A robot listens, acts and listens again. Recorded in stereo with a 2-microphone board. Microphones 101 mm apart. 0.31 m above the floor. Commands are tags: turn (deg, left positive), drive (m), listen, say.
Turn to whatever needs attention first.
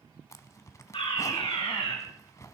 <turn deg="65"/>
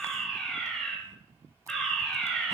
<turn deg="10"/>
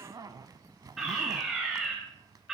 <say>Found it: a fire alarm, straight ahead, over 4 m away.</say>